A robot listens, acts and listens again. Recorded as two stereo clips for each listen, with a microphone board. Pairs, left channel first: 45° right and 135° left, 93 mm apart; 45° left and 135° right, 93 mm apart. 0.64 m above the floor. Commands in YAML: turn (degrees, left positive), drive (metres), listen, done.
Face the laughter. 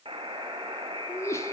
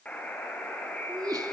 turn: -100
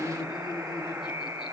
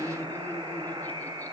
turn: -25
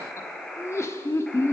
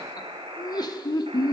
turn: 10
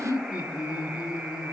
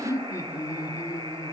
done: "Facing the laughter."